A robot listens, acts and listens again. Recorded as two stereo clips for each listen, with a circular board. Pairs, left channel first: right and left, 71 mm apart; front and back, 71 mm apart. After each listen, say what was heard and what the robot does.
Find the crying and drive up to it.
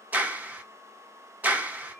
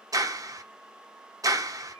Keep listening.
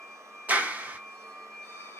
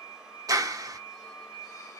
Keep listening.
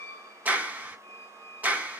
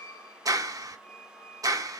I can't make out crying, only a squeak and a clap.